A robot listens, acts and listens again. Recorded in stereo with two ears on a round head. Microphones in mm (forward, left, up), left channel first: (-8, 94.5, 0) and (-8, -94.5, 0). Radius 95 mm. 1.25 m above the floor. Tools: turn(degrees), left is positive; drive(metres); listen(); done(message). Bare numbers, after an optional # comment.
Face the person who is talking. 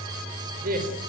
# The man speaking: about 45° right or 135° right.
turn(-45)
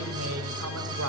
listen()
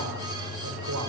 listen()
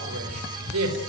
# So it is at 85° right.
turn(-85)
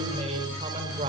# The man speaking is now 30° right.
turn(-30)
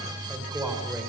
# The man speaking is now 10° right.
turn(-10)
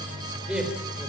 done("Found it: a man speaking, straight ahead.")